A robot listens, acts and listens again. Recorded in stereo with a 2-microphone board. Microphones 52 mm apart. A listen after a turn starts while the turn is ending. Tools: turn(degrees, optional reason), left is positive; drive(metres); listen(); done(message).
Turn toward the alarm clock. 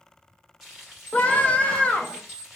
turn(degrees=45, reason="The alarm clock: about 45° left or 135° left.")
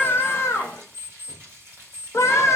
done("Found it: an alarm clock, straight ahead.")